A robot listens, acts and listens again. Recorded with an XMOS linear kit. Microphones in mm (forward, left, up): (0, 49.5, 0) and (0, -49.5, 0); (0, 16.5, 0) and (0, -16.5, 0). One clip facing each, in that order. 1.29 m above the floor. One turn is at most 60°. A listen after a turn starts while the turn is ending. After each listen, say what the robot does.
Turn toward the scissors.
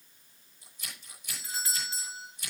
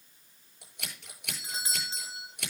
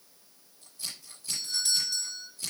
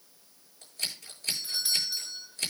Turn 60° right.
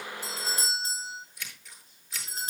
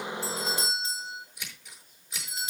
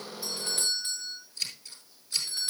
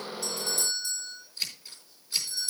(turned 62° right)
Turn 15° right.
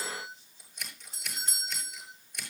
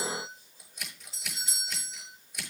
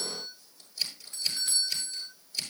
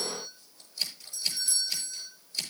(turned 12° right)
Facing the scissors.